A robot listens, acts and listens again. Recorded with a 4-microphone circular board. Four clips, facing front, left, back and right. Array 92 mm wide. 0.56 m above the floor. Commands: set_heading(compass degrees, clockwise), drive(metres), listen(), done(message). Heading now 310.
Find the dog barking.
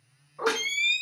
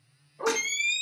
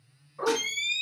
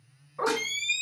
set_heading(35)
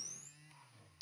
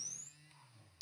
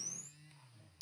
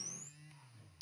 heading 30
listen()
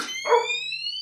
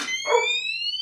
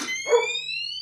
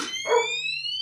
set_heading(5)
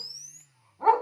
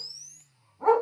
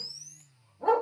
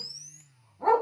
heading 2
set_heading(342)
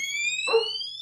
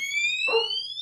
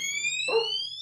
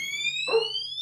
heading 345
set_heading(330)
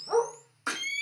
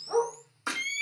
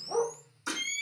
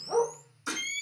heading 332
set_heading(322)
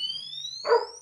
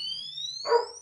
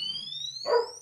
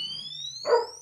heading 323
done("Found it: a dog barking, straight ahead.")